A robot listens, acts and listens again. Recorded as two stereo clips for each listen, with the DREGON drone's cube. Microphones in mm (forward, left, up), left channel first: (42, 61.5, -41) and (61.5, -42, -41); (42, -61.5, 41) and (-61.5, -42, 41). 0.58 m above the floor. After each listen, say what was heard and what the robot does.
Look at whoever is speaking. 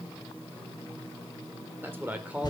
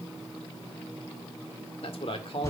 Facing the man speaking, 1 to 2 m away.